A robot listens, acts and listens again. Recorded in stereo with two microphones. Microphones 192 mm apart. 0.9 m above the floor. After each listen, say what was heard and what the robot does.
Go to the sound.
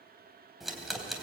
Turn 30° left.
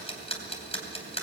So it is at 150° left. Turn 150° left.
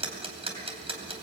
The ticking is now 30° right. Turn 30° right.
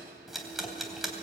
Drive 1.0 m forward.
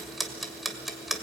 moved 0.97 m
Drive 1.0 m forward.
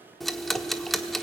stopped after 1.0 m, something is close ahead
I am next to the ticking.